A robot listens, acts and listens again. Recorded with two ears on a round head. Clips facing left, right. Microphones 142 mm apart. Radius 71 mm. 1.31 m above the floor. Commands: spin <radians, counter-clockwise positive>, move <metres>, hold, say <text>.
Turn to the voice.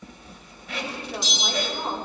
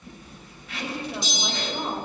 spin -0.52
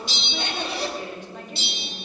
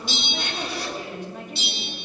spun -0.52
spin -2.36
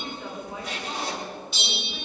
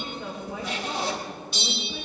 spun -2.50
say Facing the woman speaking.